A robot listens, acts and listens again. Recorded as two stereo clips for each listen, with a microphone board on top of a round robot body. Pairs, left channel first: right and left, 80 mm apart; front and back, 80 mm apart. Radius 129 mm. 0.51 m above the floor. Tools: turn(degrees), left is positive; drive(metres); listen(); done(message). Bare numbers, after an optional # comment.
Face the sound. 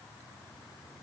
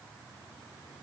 listen()
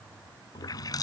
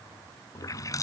# The running tap: 50° right.
turn(-50)
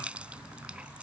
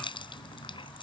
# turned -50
# The running tap is now 15° left.
turn(15)
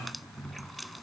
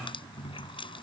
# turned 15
done("Found it: a running tap, straight ahead.")